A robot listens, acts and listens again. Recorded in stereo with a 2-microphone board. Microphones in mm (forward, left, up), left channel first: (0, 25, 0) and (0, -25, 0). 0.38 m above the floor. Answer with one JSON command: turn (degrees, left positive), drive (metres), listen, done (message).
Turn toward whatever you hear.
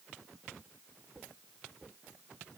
{"listen": true}
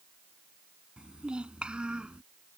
{"turn": -20}
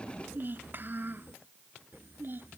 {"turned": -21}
{"turn": -140}
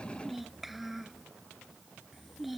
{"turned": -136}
{"done": "Facing the child speaking."}